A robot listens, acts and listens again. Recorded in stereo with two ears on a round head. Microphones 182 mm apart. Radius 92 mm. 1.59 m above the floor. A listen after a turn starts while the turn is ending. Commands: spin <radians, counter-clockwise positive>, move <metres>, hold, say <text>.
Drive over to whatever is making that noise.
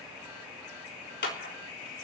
spin 1.05
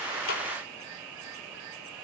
hold
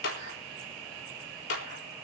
spin 1.05
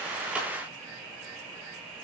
hold
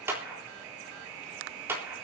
spin -0.17
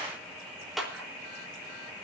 move 1.0
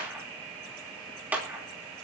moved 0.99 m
spin -0.17
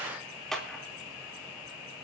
move 1.0
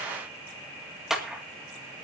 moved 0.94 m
move 1.0
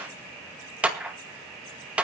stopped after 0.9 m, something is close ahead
say Arrived at the clap, straight ahead.